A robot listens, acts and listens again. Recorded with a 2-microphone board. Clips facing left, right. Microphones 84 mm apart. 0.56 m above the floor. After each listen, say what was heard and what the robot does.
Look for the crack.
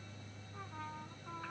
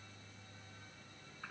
Keep listening.
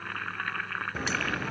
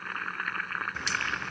The crack: about 35° left or 145° left. Turn 35° left.
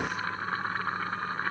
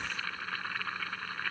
Keep listening.
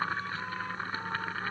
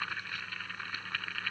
I heard a crack, but can't make it out now. It was about straight ahead or 110° left.